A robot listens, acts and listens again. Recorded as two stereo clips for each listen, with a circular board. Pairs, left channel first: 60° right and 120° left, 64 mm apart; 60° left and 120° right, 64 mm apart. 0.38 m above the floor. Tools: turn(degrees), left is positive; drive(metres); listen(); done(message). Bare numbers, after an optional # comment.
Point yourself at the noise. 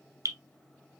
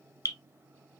# The dripping: 85° left.
turn(85)
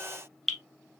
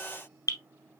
# The dripping is now 25° left.
turn(25)
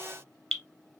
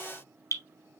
# The dripping is now 15° left.
turn(15)
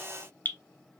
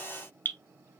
done("Facing the dripping, 1 to 2 m away.")